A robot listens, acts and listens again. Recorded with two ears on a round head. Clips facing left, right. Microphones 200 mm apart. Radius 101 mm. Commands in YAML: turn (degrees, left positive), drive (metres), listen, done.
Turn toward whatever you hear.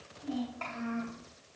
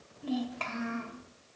turn: -70
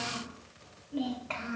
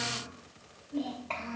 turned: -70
turn: 15
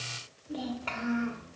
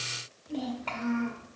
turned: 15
turn: 15
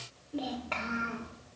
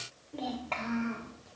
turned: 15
turn: 15
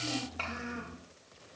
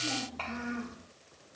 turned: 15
turn: 10
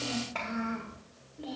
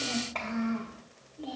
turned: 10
done: "Facing the child speaking."